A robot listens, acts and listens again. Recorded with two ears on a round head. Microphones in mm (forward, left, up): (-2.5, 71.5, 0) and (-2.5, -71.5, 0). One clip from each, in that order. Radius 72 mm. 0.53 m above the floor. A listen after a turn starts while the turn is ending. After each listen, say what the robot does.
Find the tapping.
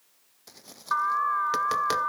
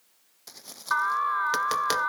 Turn 25° right.
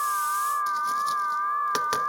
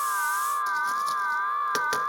Keep listening.
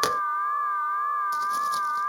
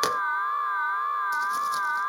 Keep listening.
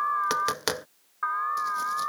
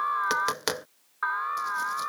Found it: tapping, straight ahead.